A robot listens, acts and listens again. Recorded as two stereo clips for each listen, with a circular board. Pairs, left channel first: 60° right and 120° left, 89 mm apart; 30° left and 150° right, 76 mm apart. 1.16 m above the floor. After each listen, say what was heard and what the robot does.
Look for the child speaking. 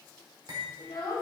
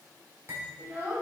The child speaking: 90° right. Turn 90° right.
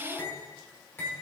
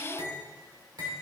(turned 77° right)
Nothing new. It was at 10° right. Turn 10° right.
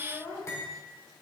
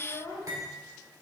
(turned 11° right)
Facing the child speaking, over 4 m away.